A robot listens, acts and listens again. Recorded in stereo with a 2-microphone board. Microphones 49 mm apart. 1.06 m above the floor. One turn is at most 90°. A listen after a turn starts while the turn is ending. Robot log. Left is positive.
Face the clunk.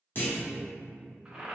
note: The clunk: about 45° left or 135° left.
cmd yaw +45
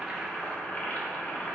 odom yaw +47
cmd idle
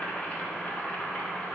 end: I heard a clunk, but can't make it out now. It was about 5° right or 90° left.